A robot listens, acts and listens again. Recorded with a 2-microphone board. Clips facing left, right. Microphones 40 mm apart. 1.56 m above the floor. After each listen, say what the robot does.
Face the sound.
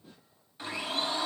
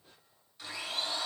Turn 25° left.
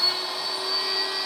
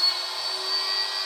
Found it: a blender, straight ahead, over 4 m away.